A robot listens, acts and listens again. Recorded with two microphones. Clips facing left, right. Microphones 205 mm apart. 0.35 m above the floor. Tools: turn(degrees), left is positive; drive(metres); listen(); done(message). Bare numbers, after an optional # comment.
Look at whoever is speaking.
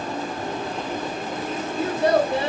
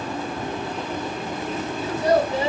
# The child speaking: about 65° left or 115° left.
turn(65)
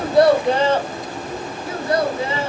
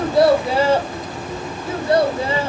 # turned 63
# So it is at 40° right.
turn(-40)
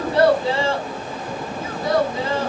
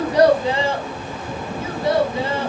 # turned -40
# The child speaking is now 25° right.
turn(-25)
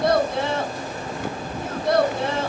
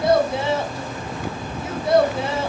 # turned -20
done("Facing the child speaking.")